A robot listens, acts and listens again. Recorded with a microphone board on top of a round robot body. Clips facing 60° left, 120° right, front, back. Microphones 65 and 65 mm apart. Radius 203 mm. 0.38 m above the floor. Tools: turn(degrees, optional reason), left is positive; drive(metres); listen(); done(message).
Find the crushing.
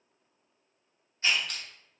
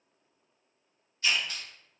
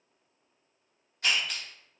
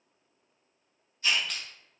turn(degrees=85, reason="The crushing: 85° left.")
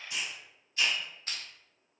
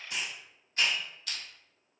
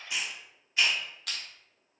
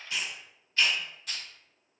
done("Facing the crushing.")